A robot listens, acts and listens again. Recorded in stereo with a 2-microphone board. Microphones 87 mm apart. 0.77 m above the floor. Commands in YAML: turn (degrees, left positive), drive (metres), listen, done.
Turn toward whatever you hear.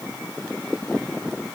listen: true
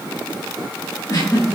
turn: 45
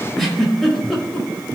done: "Found it: a giggle, straight ahead."